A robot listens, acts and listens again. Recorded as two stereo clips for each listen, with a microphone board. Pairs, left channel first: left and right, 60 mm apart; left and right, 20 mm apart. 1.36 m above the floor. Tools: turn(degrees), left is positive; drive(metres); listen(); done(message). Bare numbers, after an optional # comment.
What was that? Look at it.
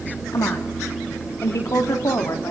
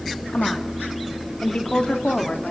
# The woman speaking: about 60° left or 120° left.
turn(60)
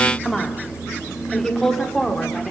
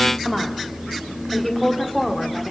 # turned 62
# So it is at 10° left.
turn(10)
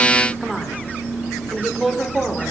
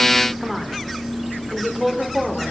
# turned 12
done("Found it: a woman speaking, straight ahead, over 4 m away.")